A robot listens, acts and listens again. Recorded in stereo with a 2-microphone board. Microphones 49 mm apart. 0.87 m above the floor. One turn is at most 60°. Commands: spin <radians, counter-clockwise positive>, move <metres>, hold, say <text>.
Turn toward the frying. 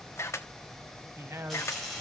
spin 0.52
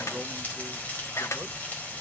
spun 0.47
spin 1.05
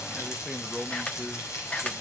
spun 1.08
spin 1.05
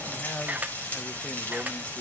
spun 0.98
spin 0.52
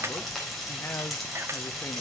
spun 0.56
say Facing the frying, over 4 m away.